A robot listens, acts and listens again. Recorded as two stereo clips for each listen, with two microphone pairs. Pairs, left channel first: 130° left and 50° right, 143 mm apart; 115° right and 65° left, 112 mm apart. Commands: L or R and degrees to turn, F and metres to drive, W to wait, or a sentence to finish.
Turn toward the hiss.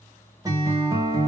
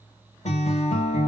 W
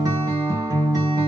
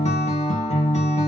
W
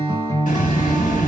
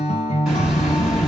L155
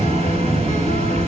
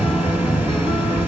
R10
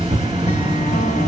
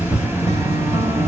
Facing the hiss, 1 to 2 m away.